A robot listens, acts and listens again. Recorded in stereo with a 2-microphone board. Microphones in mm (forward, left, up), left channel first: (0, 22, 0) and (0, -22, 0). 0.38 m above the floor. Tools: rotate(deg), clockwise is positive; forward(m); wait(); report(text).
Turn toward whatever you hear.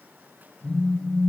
rotate(-30)
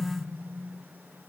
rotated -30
wait()
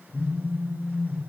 rotate(-120)
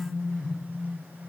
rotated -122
report("Found it: a phone buzzing, straight ahead, over 4 m away.")